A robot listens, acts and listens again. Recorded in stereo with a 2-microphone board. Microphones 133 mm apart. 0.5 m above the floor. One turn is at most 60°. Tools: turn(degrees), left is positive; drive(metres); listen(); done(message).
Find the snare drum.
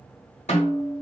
turn(degrees=60)
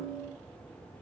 turn(degrees=20)
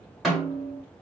done("Found it: a snare drum, straight ahead, 1 to 2 m away.")